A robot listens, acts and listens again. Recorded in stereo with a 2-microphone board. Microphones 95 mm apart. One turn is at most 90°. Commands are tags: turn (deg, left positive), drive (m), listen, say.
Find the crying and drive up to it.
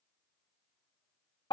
<listen/>
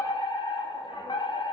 <listen/>
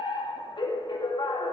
<say>I can't make out crying to turn to.</say>